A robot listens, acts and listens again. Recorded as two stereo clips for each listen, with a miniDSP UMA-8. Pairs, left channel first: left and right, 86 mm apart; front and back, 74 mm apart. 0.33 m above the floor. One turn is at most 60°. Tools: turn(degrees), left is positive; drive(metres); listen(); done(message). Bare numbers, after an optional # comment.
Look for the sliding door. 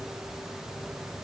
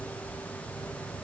listen()
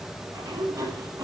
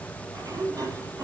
# The sliding door: 135° right.
turn(-60)
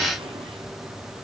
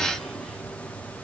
# Nothing new. It was at 75° right.
turn(-60)
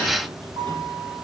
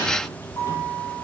# The sliding door is now 45° right.
turn(-45)
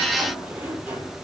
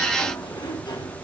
# The sliding door is now 15° right.
turn(-15)
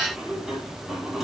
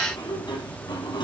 done("Found it: a sliding door, straight ahead.")